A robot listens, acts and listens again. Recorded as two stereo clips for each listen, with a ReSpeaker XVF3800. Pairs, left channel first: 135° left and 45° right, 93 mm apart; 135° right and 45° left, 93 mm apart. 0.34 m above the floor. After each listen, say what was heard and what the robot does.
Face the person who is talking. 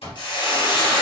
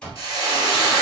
Keep listening.
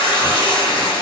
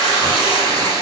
Keep listening.
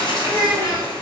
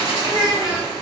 The child speaking: 175° left. Turn 175° left.
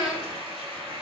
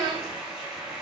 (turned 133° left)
The child speaking is now 40° left. Turn 40° left.
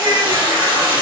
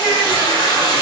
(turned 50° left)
The child speaking is now 10° right. Turn 10° right.
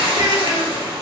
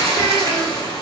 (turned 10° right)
Keep listening.
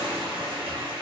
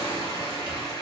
Keep listening.
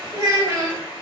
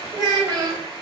Facing the child speaking, 1 to 2 m away.